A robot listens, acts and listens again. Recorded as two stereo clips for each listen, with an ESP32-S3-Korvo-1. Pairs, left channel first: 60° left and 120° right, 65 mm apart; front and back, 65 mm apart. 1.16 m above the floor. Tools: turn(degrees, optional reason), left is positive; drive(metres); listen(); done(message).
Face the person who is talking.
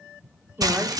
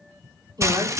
turn(degrees=-175, reason="The woman speaking: 175° right.")
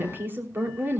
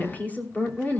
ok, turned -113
turn(degrees=-65, reason="The woman speaking is now 65° right.")
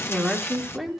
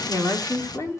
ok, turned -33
turn(degrees=-30, reason="The woman speaking is now 30° right.")
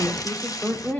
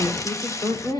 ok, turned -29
done("Facing the woman speaking.")